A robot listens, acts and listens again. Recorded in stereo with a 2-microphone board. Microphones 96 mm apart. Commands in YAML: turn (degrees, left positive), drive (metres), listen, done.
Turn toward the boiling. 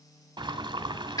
turn: -55
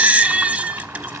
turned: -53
turn: -35
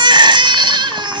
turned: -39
listen: true
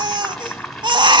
done: "Found it: boiling, straight ahead, 1 to 2 m away."